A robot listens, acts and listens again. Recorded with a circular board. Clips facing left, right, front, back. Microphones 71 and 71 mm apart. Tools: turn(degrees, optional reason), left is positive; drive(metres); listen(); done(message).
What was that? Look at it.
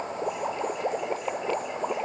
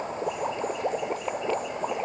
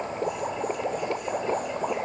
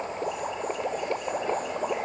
listen()
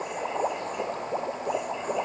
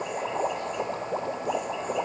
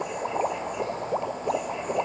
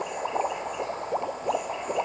listen()
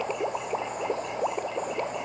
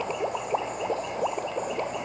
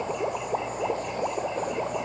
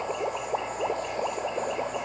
done("I can't make out anything.")